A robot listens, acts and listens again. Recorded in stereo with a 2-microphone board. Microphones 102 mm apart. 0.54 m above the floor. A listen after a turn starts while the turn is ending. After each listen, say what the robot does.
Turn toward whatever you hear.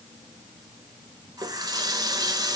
Turn 40° right.
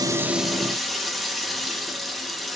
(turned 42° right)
Found it: a running tap, straight ahead.